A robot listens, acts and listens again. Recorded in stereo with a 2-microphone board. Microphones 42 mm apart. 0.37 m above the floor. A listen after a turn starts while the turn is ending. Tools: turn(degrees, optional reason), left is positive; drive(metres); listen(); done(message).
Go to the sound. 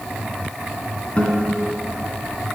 turn(degrees=30, reason="The guitar: about 30° left or 150° left.")
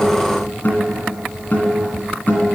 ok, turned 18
turn(degrees=135, reason="So it is at 135° left.")
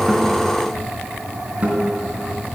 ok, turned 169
turn(degrees=-35, reason="The guitar is now 35° right.")
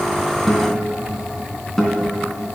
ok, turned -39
drive(metres=1.0)
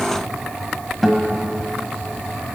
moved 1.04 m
drive(metres=1.0)
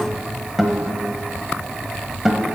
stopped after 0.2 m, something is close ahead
turn(degrees=-10, reason="The guitar is now 10° right.")
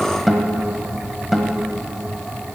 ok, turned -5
done("I am next to the guitar.")